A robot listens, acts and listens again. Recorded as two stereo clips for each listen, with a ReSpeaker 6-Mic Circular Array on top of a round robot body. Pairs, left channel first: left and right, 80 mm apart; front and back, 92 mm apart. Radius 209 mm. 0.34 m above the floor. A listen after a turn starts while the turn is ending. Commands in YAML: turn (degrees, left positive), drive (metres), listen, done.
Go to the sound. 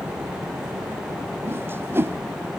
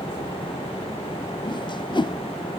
turn: -30
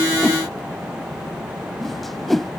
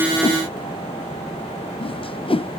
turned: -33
drive: 1.0
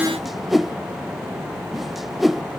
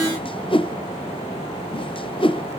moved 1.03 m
drive: 1.0
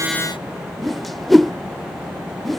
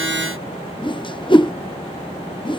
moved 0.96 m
drive: 1.0
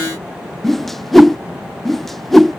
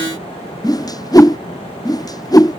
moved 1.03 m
drive: 1.0
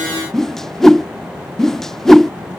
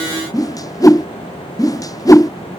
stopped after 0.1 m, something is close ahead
done: "Arrived at the whoosh, straight ahead."